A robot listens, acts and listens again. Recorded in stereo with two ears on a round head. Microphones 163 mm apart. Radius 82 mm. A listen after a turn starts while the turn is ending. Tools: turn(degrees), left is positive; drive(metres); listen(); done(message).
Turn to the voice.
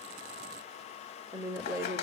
turn(degrees=-15)
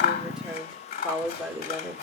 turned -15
done("Found it: a woman speaking, straight ahead.")